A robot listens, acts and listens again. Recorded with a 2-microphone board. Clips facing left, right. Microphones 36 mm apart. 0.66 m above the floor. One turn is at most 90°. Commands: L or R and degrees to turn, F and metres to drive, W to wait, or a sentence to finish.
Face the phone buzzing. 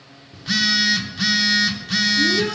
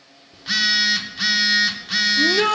R30
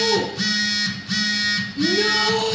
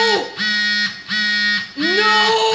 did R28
R90
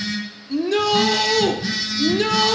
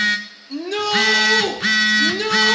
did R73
R70
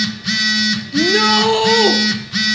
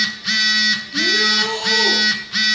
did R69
Facing the phone buzzing.